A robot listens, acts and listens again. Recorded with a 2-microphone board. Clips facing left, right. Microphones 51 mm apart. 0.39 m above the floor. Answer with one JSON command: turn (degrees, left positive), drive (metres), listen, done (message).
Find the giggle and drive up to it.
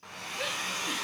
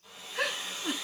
{"turn": -70}
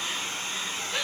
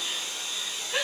{"turn": -20}
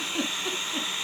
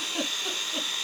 {"drive": 1.0}
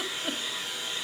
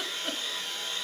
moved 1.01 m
{"drive": 1.0}
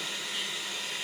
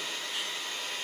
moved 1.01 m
{"listen": true}
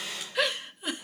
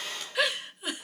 {"drive": 1.0}
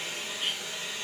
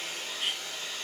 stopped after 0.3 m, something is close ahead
{"listen": true}
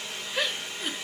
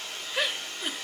{"turn": -15}
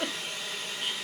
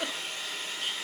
{"done": "Arrived at the giggle, straight ahead."}